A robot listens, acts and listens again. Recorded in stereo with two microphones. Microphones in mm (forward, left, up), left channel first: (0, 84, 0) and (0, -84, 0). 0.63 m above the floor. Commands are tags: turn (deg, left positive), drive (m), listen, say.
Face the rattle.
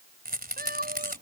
<turn deg="-70"/>
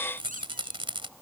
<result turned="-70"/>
<turn deg="-35"/>
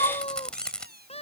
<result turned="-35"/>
<say>Found it: a rattle, straight ahead.</say>